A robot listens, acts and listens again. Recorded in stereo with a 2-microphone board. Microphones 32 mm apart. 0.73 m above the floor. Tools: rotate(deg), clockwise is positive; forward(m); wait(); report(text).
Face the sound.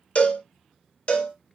rotate(-45)
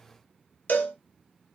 rotate(-90)
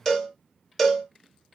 report("Facing the cowbell.")